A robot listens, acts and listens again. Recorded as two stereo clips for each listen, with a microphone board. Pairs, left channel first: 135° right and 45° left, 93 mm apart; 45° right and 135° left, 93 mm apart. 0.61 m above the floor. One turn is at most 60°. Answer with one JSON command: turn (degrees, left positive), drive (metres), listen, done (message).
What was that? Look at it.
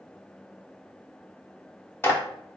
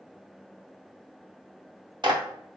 {"turn": 60}
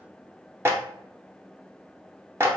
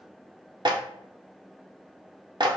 {"turn": 60}
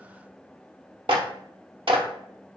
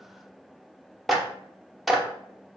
{"turn": 45}
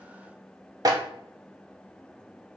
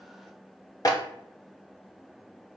{"done": "Facing the clap, under 1 m away."}